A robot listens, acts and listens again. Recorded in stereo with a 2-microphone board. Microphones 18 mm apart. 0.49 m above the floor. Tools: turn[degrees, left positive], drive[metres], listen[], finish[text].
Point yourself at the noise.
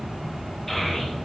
Thought: The child speaking: about 15° left or 165° left.
Action: turn[15]
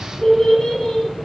Thought: The child speaking: about 40° left or 140° left.
Action: turn[40]
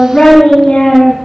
Thought: So it is at 100° left.
Action: turn[100]
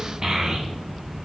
Thought: The child speaking is now 35° right.
Action: turn[-35]
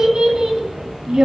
Thought: The child speaking is now 45° right.
Action: turn[-45]
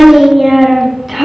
Action: finish[Found it: a child speaking, straight ahead.]